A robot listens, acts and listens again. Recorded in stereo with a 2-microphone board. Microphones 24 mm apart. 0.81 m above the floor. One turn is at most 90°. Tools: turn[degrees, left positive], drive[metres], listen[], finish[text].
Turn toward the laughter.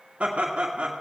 Thought: The laughter: about 55° right or 125° right.
Action: turn[-55]
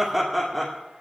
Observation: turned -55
Action: finish[Found it: laughter, straight ahead, 2 to 4 m away.]